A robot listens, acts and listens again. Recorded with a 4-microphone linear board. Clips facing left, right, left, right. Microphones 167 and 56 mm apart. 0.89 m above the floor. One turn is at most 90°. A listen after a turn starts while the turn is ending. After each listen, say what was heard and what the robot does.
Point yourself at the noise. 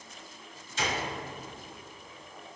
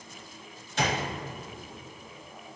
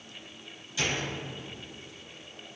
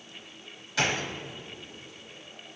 The gunshot: about 65° right or 115° right. Turn 65° right.
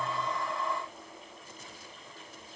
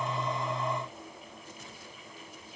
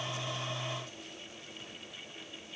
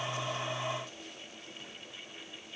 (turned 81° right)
Keep listening.
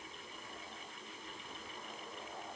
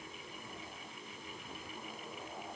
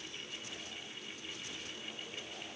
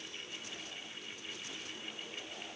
I heard a gunshot, but can't make it out now. It was about 20° left or 35° right.